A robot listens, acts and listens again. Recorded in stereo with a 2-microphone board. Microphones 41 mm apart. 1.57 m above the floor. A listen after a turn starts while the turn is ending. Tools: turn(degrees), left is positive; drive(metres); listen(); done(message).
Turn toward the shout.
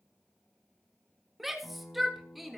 turn(degrees=-30)
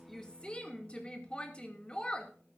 turn(degrees=25)
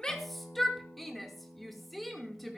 done("Found it: a shout, straight ahead, 2 to 4 m away.")